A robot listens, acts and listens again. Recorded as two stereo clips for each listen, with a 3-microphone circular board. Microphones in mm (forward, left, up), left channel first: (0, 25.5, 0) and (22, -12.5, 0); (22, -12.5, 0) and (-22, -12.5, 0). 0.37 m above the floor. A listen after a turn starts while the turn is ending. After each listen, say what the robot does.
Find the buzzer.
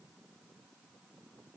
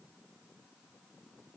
Keep listening.
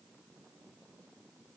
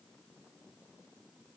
Keep listening.
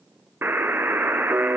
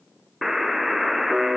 Turn 95° right.
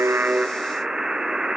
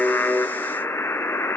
Turn 15° left.
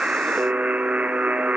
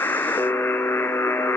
Found it: a buzzer, straight ahead.